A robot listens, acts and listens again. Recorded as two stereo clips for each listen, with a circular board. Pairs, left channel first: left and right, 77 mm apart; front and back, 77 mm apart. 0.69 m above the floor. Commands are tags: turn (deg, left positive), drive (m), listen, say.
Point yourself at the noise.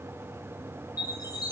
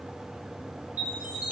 <turn deg="115"/>
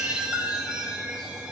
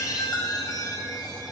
<turn deg="-10"/>
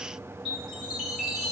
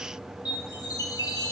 <say>Facing the chime.</say>